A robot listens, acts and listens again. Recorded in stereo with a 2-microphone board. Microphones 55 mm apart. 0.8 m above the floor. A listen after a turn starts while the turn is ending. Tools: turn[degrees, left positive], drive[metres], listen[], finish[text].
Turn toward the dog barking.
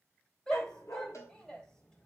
Thought: The dog barking: about 70° left or 110° left.
Action: turn[70]
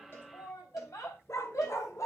Thought: So it is at 75° left.
Action: turn[75]
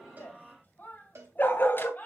Thought: The dog barking is now 40° left.
Action: turn[40]
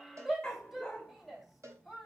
Thought: The dog barking is now 15° left.
Action: turn[15]
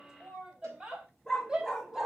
Action: finish[Facing the dog barking, 2 to 4 m away.]